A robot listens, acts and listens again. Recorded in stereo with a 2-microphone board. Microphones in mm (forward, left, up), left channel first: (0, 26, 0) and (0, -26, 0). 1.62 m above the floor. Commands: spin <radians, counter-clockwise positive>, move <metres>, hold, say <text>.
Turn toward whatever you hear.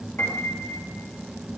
spin 0.79
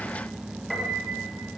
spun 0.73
say Facing the piano, 2 to 4 m away.